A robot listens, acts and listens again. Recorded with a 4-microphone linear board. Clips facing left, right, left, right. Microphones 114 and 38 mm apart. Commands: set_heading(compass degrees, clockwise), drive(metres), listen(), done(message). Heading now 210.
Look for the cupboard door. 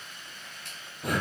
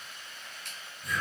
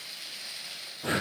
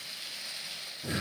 listen()
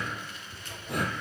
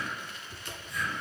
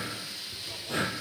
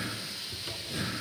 set_heading(260)
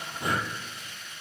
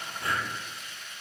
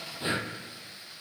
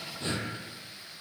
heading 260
listen()
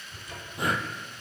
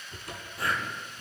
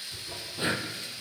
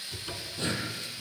set_heading(335)
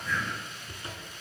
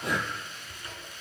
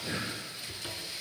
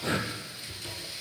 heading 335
set_heading(315)
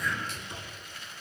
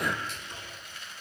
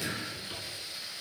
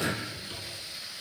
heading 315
set_heading(305)
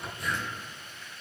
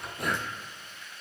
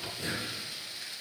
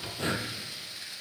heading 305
done("Facing the cupboard door, over 4 m away.")